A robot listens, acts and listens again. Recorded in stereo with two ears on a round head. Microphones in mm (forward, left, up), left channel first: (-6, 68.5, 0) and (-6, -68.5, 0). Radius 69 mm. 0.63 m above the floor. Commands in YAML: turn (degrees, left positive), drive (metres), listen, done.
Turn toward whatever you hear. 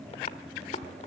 turn: 45
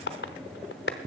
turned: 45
turn: 90
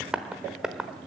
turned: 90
done: "Facing the tapping."